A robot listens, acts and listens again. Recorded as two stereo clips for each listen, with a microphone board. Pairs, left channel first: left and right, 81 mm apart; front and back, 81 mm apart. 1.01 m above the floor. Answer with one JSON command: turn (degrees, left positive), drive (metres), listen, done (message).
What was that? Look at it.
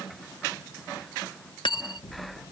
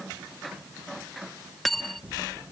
{"turn": 90}
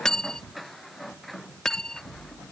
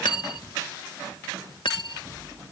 {"done": "Found it: cutlery clinking, straight ahead."}